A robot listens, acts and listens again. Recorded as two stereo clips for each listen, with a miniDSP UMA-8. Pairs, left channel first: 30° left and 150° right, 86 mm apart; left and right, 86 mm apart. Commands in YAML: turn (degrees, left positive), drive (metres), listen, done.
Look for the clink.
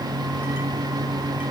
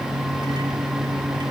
listen: true
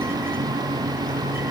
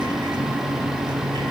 listen: true
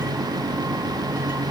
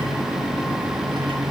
done: "I can't make out a clink."